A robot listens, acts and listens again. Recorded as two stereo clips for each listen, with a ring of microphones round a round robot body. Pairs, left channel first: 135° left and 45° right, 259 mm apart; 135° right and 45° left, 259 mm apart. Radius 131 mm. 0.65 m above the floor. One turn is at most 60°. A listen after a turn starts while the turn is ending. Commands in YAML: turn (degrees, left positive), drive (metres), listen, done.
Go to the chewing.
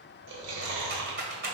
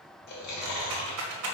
turn: -60
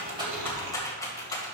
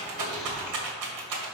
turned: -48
turn: -40
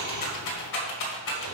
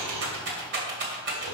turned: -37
listen: true
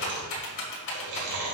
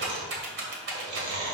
drive: 1.0
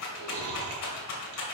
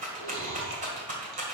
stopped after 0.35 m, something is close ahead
done: "Something is in my way. I am facing the chewing but have not reached it."